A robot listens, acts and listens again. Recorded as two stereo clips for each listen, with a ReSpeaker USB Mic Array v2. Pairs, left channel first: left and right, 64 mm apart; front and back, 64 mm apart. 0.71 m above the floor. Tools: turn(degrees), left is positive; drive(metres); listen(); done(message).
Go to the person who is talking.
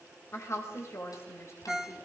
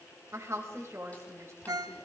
turn(degrees=135)
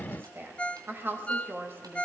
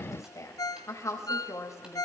turn(degrees=-35)
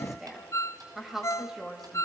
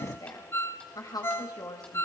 drive(metres=1.0)
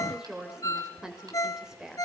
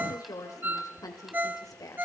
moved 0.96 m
turn(degrees=-10)
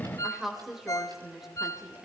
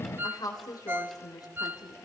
drive(metres=1.0)
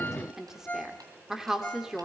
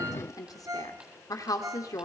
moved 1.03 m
drive(metres=1.0)
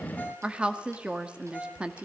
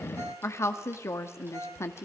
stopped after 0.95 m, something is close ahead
turn(degrees=-20)
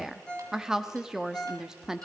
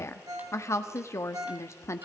turn(degrees=-10)
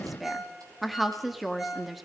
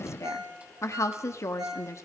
done("I am next to the woman speaking.")